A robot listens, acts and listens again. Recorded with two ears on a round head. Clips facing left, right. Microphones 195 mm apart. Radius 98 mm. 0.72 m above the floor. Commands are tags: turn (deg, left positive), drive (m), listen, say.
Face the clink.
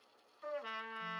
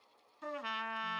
<listen/>
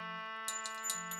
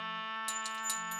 <turn deg="30"/>
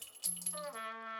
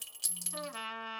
<turn deg="-25"/>
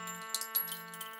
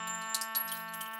<say>Facing the clink, 1 to 2 m away.</say>